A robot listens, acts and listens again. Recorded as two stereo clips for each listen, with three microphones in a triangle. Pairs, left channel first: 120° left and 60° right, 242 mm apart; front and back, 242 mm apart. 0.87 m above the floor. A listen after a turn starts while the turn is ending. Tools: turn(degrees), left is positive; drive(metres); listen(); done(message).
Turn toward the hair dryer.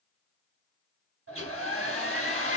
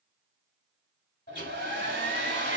turn(degrees=-50)
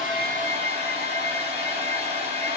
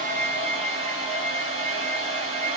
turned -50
done("Facing the hair dryer, 1 to 2 m away.")